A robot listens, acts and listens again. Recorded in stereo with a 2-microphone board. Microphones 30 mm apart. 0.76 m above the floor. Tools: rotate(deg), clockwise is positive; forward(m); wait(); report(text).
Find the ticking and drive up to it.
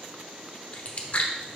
wait()
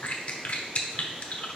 wait()
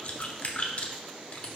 report("I can't make out ticking, only chewing.")